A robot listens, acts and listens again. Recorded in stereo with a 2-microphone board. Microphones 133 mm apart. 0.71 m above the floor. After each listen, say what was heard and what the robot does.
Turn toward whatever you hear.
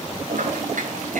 Turn 90° right.
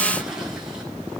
Keep listening.
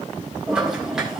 Facing the toilet flushing.